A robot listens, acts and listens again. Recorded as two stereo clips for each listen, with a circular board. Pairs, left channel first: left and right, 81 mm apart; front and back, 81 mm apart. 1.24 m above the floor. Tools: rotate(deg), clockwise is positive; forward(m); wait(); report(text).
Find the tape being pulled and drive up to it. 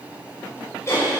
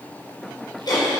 wait()
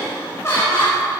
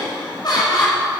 wait()
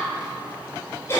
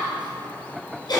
report("I can't make out tape being pulled to turn to.")